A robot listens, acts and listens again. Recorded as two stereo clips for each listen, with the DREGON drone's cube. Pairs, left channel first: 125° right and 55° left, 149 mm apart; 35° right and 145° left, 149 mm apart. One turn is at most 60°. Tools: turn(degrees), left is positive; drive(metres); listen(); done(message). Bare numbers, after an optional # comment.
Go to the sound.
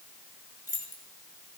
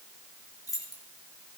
# The keys jangling: 100° right.
turn(-60)
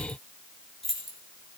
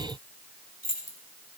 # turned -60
# The keys jangling is now 35° right.
turn(-35)
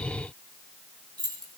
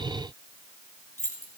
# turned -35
drive(1.0)
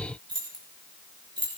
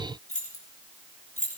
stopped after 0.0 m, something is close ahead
done("Something is in my way. I am facing the keys jangling but have not reached it.")